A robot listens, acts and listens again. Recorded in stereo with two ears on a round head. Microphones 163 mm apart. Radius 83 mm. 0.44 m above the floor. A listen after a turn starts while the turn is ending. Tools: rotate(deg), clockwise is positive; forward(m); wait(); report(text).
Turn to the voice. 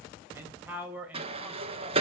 rotate(30)
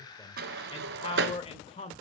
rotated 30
rotate(-35)
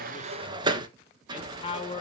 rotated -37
rotate(-35)
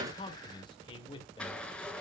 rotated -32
rotate(-25)
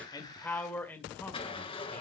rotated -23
rotate(-10)
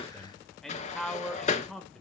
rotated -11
report("Facing the man speaking.")